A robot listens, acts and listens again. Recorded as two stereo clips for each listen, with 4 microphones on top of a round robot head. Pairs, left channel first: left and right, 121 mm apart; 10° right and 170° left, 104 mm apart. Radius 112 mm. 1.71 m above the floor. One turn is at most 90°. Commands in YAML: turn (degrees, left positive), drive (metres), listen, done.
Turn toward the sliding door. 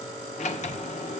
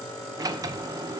turn: 90
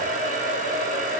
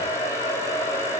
turn: 25
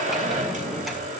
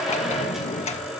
done: "Found it: a sliding door, straight ahead, 1 to 2 m away."